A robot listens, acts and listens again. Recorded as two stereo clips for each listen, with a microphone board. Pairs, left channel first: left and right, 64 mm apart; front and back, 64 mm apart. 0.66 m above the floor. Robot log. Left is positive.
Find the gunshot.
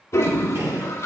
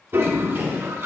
note: The gunshot: 125° right.
cmd yaw -125
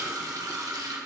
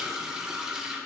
end: I heard a gunshot from this way, but can't make it out now.